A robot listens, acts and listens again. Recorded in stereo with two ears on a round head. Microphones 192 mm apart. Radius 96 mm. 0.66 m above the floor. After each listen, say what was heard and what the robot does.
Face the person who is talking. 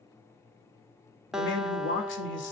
The man speaking: about 60° left or 120° left. Turn 60° left.
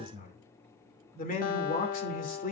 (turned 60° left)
So it is at 45° left. Turn 45° left.
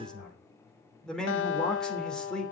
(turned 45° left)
Found it: a man speaking, straight ahead, 2 to 4 m away.